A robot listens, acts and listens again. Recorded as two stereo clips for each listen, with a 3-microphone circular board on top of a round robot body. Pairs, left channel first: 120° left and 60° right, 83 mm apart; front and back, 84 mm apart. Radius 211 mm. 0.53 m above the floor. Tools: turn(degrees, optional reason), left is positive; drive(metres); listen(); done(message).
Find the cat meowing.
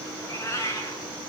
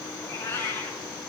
turn(degrees=60, reason="The cat meowing: 60° left.")
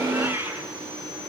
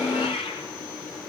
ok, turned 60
done("Facing the cat meowing.")